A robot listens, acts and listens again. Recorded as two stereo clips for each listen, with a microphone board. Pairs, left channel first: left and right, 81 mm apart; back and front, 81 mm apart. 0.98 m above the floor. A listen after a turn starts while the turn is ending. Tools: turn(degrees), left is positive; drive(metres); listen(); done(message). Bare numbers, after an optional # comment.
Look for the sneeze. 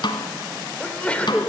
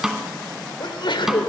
# The sneeze: 165° left.
turn(165)
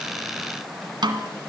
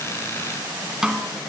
done("I heard a sneeze from this way, but can't make it out now.")